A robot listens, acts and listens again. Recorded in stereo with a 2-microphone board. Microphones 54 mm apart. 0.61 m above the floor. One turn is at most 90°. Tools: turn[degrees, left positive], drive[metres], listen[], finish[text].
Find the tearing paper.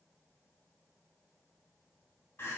Action: listen[]
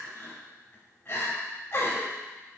Action: listen[]
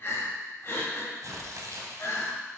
Thought: The tearing paper: about 75° right or 105° right.
Action: turn[-75]
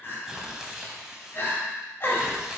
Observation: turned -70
Thought: So it is at 10° right.
Action: turn[-10]
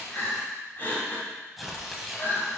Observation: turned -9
Action: finish[Facing the tearing paper, under 1 m away.]